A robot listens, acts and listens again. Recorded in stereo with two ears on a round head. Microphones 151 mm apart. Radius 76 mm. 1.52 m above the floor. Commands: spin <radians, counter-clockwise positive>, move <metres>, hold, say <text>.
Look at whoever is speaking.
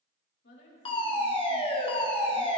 spin 1.22
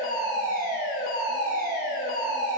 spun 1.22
hold
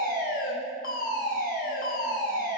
hold
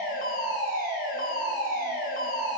say I heard a woman speaking, but can't make it out now. It was about straight ahead or 40° left.